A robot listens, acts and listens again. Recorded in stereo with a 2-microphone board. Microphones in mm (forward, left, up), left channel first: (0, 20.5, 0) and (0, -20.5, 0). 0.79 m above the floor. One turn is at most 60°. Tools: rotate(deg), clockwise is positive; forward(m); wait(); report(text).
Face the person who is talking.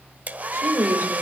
rotate(60)
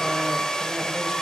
wait()
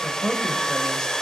report("Found it: a woman speaking, straight ahead.")